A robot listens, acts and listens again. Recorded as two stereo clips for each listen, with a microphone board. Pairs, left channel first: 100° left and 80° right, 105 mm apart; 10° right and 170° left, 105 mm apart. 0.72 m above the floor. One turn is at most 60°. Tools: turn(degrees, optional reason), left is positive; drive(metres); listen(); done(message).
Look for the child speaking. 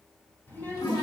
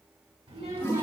turn(degrees=60, reason="The child speaking: 170° left.")
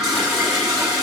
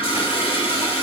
turn(degrees=60, reason="Nothing new. It was at 110° left.")
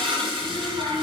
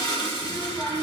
turn(degrees=50, reason="The child speaking is now 50° left.")
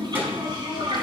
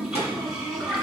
turn(degrees=-10, reason="The child speaking is now 10° right.")
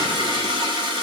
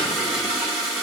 listen()
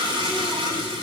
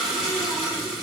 listen()
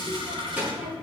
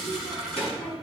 done("Facing the child speaking, over 4 m away.")